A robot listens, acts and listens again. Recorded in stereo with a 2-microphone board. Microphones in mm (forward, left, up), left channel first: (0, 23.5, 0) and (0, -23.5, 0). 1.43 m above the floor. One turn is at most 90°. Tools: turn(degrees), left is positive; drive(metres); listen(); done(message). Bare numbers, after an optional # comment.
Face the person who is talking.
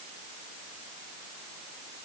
listen()
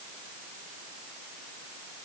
listen()
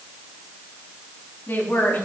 # The woman speaking: about 45° left or 135° left.
turn(45)
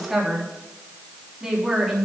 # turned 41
# So it is at 10° right.
turn(-10)
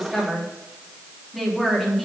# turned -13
done("Found it: a woman speaking, straight ahead, 2 to 4 m away.")